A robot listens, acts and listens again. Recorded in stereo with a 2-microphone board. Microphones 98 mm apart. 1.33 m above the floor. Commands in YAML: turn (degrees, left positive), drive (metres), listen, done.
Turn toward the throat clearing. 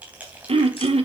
turn: -75
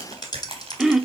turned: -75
done: "Facing the throat clearing."